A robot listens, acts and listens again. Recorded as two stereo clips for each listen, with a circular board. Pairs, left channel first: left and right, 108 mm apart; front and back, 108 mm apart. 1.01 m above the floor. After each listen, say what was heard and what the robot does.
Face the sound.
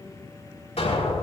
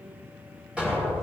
The explosion: 100° left. Turn 100° left.
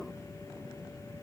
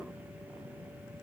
I heard an explosion from this way, but can't make it out now.